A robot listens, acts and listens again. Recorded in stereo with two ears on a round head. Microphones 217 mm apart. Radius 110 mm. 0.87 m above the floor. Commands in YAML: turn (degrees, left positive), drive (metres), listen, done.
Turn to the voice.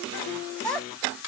turn: 30
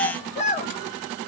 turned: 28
turn: 145
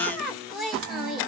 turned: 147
done: "Facing the child speaking, under 1 m away."